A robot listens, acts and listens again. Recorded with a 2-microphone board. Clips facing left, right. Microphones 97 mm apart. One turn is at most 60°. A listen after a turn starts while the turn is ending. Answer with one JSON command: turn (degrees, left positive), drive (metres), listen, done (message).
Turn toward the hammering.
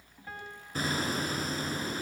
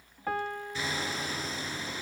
{"turn": 45}
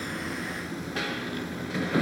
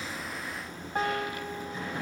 {"turn": 60}
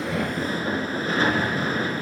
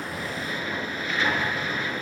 {"turn": 40}
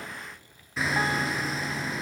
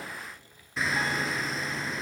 {"done": "Found it: hammering, straight ahead."}